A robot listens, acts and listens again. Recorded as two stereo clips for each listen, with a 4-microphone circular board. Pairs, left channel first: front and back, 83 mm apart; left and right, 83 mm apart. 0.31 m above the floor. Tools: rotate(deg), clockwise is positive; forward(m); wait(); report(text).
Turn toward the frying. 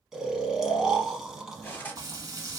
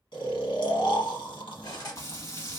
rotate(-140)
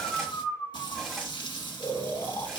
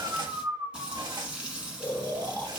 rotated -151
rotate(10)
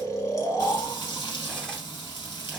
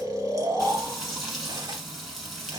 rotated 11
report("Facing the frying.")